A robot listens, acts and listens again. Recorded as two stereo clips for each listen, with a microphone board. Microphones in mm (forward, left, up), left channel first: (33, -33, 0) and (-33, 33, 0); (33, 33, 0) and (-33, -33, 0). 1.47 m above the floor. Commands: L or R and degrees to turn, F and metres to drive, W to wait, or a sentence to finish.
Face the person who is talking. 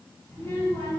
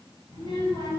L20
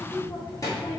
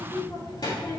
Found it: a child speaking, straight ahead.